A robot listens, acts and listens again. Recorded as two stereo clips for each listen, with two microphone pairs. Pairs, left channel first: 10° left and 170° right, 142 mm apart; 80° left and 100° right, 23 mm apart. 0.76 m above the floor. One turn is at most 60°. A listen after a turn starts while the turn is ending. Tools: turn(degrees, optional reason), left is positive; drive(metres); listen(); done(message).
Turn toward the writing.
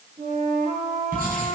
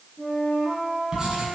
turn(degrees=-60, reason="The writing: 165° right.")
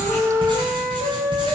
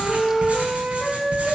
turn(degrees=-60, reason="The writing is now 115° right.")
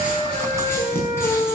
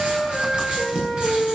turn(degrees=-60, reason="The writing is now 60° right.")
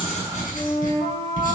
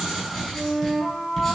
turn(degrees=-10, reason="The writing is now 10° right.")
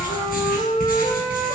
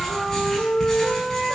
done("Facing the writing.")